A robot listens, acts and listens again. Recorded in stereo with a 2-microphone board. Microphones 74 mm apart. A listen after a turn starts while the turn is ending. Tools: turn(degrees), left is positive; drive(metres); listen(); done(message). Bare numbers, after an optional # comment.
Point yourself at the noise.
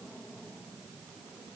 listen()
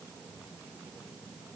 listen()
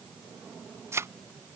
# The thud: about 40° right or 140° right.
turn(-40)
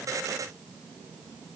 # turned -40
listen()
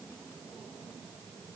done("I heard a thud, but can't make it out now. It was about straight ahead or 100° right.")